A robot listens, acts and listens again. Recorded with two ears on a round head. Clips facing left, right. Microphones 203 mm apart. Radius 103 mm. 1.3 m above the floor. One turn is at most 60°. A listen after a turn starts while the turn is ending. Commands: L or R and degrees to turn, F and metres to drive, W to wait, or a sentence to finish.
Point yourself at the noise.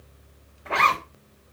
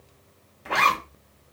R35
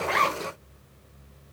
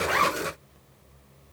Found it: a zipper, straight ahead.